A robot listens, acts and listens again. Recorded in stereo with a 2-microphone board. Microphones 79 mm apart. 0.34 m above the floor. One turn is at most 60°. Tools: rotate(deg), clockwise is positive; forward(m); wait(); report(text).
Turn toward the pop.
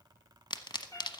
rotate(-60)
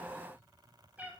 wait()
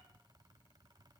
report("I heard a pop, but can't make it out now. It was about 10° left or 50° left.")